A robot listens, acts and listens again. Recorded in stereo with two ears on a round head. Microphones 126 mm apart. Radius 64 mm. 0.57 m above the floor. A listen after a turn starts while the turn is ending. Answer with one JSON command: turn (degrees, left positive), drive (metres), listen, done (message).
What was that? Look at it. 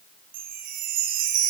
{"turn": -65}
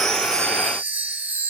{"turn": -15}
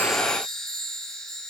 {"done": "Found it: a chime, straight ahead, 2 to 4 m away."}